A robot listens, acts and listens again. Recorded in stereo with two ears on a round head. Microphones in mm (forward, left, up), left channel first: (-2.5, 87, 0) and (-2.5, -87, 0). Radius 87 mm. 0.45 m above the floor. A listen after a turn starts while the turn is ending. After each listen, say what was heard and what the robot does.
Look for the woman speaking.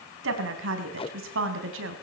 The woman speaking: about 75° right or 105° right. Turn 75° right.
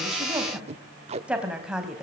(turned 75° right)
Facing the woman speaking.